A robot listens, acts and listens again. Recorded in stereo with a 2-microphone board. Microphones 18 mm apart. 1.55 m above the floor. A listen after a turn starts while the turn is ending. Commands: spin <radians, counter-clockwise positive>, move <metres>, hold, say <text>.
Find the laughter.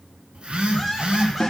spin -0.52
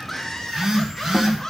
spin 0.26
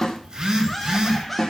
say Facing the laughter.